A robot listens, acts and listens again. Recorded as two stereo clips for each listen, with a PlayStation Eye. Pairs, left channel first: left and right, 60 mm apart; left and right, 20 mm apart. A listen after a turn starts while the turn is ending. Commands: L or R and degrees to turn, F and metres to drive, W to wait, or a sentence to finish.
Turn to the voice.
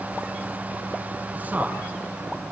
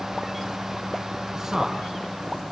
R25
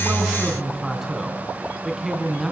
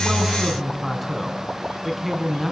Facing the man speaking, over 4 m away.